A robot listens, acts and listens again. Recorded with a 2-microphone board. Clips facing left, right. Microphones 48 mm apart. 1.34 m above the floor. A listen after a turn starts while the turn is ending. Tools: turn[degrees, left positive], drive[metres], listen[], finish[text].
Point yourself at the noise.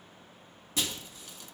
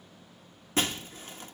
Thought: The breaking glass: about 40° right or 140° right.
Action: turn[-40]
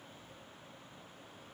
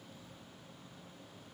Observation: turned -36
Action: listen[]
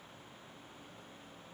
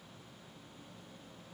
Action: finish[I heard breaking glass, but can't make it out now. It was about 5° right or 105° right.]